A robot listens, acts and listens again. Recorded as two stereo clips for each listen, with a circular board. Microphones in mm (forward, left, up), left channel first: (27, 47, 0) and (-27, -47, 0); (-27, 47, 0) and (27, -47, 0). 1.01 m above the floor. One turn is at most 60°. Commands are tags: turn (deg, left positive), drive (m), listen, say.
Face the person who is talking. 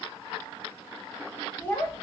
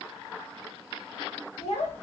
<turn deg="60"/>
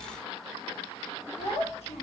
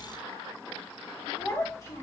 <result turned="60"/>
<turn deg="60"/>
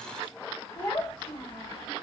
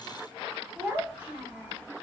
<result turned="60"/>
<turn deg="15"/>
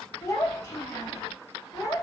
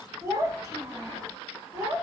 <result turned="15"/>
<say>Facing the child speaking.</say>